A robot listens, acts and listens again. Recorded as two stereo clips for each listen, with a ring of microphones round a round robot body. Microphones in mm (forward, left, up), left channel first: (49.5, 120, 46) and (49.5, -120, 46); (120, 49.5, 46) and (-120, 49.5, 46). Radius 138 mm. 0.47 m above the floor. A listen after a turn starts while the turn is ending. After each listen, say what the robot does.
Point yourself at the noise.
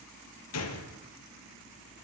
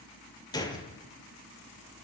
Turn 75° left.
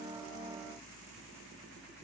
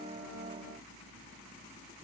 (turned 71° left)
I heard a gunshot from this way, but can't make it out now.